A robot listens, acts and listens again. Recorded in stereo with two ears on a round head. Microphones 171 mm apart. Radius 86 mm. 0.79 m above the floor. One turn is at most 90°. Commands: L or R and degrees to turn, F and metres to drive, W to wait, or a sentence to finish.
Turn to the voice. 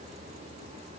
W
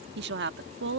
R60
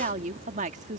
R45
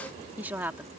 R10
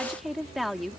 Facing the woman speaking.